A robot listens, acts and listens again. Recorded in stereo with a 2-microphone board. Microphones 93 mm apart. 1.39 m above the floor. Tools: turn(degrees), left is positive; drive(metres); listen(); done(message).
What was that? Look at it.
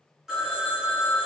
turn(degrees=-30)
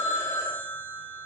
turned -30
turn(degrees=25)
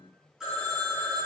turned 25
done("Facing the phone ringing.")